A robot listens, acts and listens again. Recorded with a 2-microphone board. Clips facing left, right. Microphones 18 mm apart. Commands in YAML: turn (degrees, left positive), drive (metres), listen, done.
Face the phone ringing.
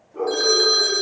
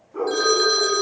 turn: -30
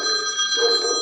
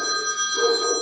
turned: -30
turn: 30
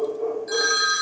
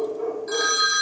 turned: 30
done: "Found it: a phone ringing, straight ahead."